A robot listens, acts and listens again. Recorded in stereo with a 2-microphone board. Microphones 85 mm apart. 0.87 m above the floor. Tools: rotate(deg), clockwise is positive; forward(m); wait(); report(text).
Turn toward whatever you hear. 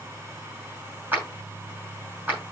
rotate(20)
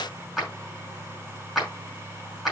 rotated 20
report("Facing the clap.")